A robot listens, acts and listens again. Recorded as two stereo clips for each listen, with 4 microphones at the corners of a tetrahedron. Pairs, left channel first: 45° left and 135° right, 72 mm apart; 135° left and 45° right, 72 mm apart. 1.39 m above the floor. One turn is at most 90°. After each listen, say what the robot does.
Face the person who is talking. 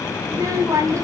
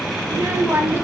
Turn 90° right.
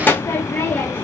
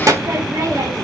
Turn 15° right.
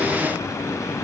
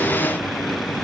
Facing the child speaking.